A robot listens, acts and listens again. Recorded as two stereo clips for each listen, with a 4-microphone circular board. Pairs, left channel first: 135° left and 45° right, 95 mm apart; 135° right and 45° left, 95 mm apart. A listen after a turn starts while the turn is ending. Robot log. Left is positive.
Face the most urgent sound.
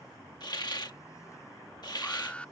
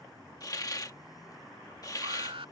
note: The alarm: 60° left.
cmd yaw +60
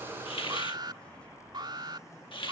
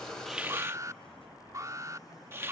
note: The alarm is now 10° right.
cmd yaw -10
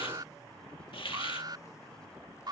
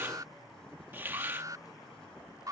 end: Found it: an alarm, straight ahead.